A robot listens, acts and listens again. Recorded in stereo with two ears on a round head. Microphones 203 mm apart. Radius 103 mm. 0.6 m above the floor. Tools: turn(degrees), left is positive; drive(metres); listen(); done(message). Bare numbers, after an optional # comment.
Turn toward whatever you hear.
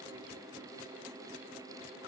listen()
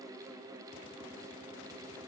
listen()
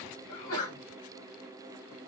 # The sneeze: about 75° left or 105° left.
turn(75)
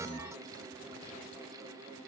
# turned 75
listen()
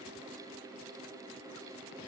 done("I heard a sneeze, but can't make it out now. It was about straight ahead or 30° left.")